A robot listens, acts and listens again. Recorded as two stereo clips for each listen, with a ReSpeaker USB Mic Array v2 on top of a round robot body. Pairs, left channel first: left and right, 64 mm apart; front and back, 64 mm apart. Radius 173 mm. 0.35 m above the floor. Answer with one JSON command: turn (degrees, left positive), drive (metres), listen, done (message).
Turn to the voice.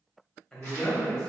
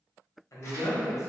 {"turn": 10}
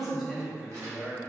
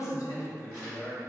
{"done": "Facing the man speaking."}